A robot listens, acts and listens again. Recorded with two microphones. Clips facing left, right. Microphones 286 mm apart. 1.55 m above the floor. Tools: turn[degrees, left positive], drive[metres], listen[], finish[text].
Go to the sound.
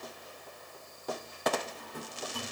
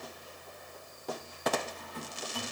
Thought: The drawer: about 45° left or 135° left.
Action: turn[45]
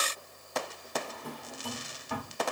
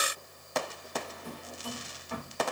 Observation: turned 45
Thought: So it is at 85° left.
Action: turn[85]
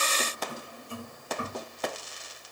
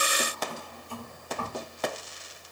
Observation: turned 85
Thought: The drawer is now 20° left.
Action: turn[20]
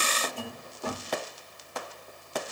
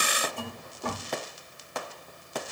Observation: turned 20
Action: drive[1.0]
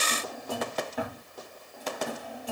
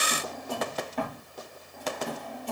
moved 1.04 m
Action: drive[1.0]
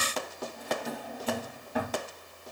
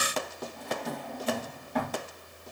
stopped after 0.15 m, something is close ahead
Action: finish[Arrived at the drawer, straight ahead.]